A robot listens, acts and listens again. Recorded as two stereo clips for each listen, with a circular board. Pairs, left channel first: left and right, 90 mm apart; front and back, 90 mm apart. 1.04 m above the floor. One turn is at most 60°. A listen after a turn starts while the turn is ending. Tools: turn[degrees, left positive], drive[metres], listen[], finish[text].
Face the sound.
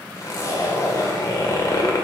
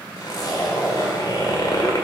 Thought: The zipper: 40° left.
Action: turn[40]
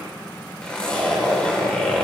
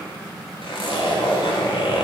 Thought: The zipper is now 15° left.
Action: turn[15]
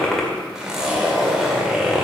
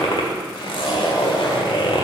Action: finish[Facing the zipper.]